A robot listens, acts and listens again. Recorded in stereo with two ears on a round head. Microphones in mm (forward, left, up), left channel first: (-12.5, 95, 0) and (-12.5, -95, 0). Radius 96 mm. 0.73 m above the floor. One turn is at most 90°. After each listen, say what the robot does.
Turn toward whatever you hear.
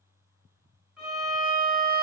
Turn 30° right.
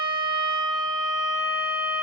Turn 90° right.
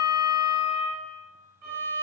Turn 50° right.
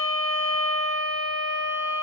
Turn 25° left.
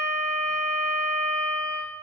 Found it: a violin, straight ahead.